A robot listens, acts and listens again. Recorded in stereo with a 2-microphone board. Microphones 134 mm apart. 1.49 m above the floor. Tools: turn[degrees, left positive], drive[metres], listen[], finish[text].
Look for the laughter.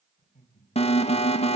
Thought: The laughter: about 70° left or 110° left.
Action: turn[70]
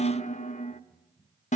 Thought: So it is at 10° right.
Action: turn[-10]
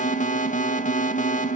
Action: listen[]
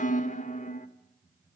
Thought: The laughter is now 15° right.
Action: turn[-15]
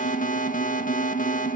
Action: listen[]
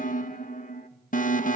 Action: listen[]
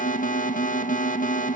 Action: finish[Facing where the laughter came from. I can't hear it now.]